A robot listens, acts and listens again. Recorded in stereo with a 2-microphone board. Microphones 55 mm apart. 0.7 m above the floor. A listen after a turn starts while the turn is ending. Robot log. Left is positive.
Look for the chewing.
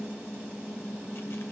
cmd idle
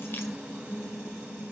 cmd idle
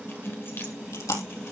cmd yaw +90
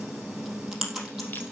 end: Facing the chewing, 2 to 4 m away.